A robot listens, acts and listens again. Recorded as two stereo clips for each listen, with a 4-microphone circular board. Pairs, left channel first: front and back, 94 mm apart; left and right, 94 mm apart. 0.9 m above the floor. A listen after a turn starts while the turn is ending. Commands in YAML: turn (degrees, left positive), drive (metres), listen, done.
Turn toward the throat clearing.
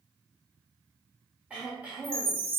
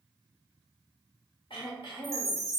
turn: 105
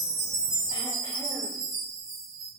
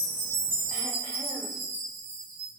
listen: true
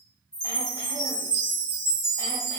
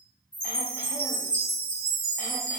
listen: true
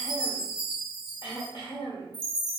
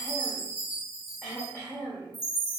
turn: 25
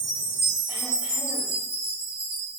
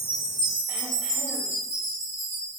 listen: true
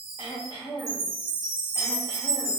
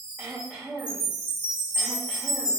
turn: -10
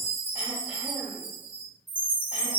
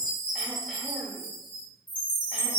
listen: true
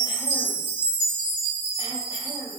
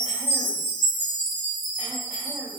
listen: true
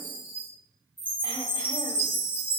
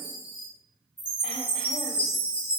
done: "Facing where the throat clearing came from. I can't hear it now."